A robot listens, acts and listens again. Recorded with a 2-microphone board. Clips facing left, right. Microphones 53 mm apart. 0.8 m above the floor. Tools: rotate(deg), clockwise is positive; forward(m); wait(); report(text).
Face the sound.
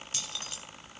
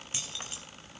rotate(20)
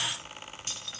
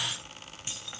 rotate(15)
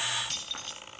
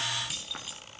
rotate(30)
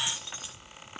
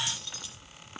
rotate(-20)
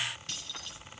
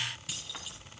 report("Facing the keys jangling.")